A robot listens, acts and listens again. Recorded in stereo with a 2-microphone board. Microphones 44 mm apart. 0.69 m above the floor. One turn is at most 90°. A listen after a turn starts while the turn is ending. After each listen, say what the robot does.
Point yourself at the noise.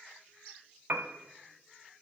Turn 55° right.
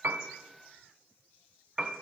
Turn 15° right.
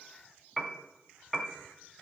Facing the piano.